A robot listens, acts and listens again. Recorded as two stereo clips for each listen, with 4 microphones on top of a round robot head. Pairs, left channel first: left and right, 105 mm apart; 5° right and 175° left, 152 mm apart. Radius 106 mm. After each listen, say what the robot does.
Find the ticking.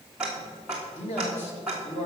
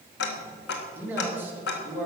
Facing the ticking, 1 to 2 m away.